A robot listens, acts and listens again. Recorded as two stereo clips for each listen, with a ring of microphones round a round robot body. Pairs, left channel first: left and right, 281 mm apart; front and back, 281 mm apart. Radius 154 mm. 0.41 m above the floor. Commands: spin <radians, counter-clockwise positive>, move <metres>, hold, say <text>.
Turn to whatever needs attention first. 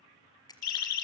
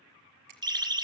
spin 1.83
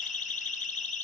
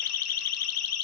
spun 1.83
spin 0.44
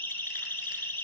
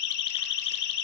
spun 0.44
say Found it: a siren, straight ahead.